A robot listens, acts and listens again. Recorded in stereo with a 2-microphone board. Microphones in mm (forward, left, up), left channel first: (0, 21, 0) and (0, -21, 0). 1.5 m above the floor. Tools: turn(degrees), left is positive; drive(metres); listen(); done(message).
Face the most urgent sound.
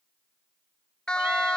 turn(degrees=20)
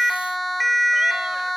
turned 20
done("Facing the siren.")